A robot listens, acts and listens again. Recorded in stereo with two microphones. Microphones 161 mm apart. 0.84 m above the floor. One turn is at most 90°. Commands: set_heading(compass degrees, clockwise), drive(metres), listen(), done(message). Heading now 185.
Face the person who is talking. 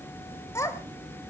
set_heading(165)
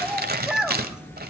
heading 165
done("Facing the child speaking.")